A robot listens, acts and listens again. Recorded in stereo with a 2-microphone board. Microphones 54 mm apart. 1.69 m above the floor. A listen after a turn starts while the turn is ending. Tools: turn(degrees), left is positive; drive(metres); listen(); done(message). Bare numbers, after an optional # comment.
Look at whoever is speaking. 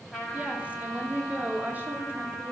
# The woman speaking: about 40° right or 140° right.
turn(-40)
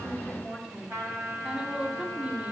# So it is at 25° right.
turn(-25)
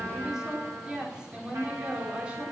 # The woman speaking is now 25° right.
turn(-25)
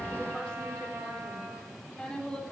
# The woman speaking is now 15° left.
turn(15)
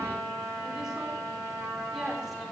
listen()
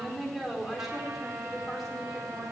done("Facing the woman speaking, over 4 m away.")